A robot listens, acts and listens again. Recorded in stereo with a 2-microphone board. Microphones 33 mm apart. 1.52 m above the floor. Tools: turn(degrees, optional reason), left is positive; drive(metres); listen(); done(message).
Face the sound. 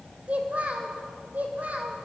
turn(degrees=-50, reason="The child speaking: about 50° right or 130° right.")
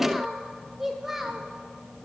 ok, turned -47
turn(degrees=-10, reason="So it is at 10° right.")
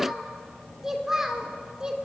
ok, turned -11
turn(degrees=-20, reason="The child speaking is now 20° right.")
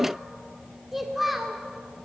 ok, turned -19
done("Facing the child speaking.")